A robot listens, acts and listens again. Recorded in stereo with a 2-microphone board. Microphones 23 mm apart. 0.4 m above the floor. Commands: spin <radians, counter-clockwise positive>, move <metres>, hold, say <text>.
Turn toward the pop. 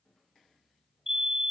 hold
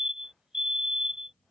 hold
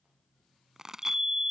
spin -0.44
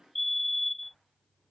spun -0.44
hold
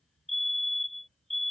say I heard a pop, but can't make it out now. It was about straight ahead or 130° right.